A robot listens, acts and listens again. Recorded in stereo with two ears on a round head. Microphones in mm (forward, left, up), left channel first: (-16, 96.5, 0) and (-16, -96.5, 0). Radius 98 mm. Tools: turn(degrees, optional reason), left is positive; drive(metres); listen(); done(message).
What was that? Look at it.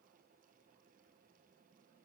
listen()
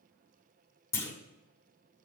turn(degrees=30)
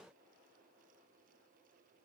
listen()
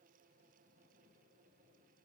done("I heard a clunk, but can't make it out now. It was about 20° right or 140° left.")